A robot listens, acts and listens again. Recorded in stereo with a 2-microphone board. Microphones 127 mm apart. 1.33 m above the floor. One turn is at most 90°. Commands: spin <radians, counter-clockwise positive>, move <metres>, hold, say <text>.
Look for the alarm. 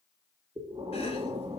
hold
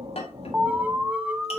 spin -0.52
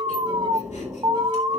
spin -1.57
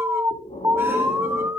spin -0.44
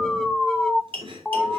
say Found it: an alarm, straight ahead.